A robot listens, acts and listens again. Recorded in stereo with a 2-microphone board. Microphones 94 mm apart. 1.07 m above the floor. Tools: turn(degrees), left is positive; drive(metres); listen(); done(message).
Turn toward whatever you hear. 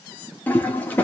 turn(degrees=15)
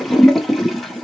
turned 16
done("Found it: a toilet flushing, straight ahead.")